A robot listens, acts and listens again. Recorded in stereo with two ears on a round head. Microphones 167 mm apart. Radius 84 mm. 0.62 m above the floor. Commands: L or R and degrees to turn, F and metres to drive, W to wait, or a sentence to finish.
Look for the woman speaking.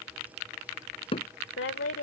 L70
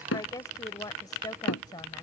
L20
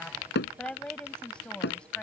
Facing the woman speaking.